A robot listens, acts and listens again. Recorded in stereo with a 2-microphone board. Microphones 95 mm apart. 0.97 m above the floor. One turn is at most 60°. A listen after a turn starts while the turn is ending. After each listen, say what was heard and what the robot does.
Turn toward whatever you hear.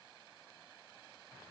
Keep listening.
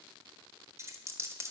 The dropped coin: about 30° right or 150° right. Turn 30° right.
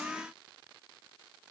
Keep listening.
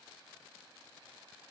I heard a dropped coin, but can't make it out now. It was about straight ahead or 120° right.